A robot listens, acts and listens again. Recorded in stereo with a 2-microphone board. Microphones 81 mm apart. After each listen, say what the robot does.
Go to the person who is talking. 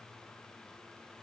Keep listening.
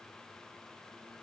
Keep listening.
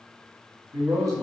Turn 50° right.
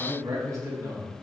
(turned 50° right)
Turn 60° right.
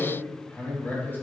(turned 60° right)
Turn 30° left.
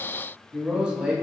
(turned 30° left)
Turn 10° right.
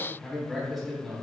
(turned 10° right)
Drive 1.0 m forward.
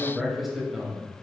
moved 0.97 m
Drive 1.0 m forward.
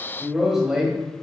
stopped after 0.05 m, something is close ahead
Turn 10° right.
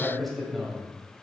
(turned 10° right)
Arrived at the man speaking, straight ahead.